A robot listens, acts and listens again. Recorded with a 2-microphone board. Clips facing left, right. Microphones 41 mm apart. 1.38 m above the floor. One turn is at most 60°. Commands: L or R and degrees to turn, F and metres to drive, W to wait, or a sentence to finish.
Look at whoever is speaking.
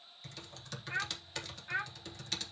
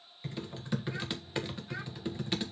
L40
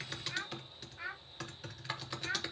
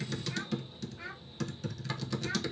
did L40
L10
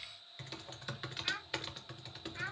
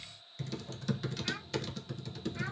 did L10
Found it: a child speaking, straight ahead.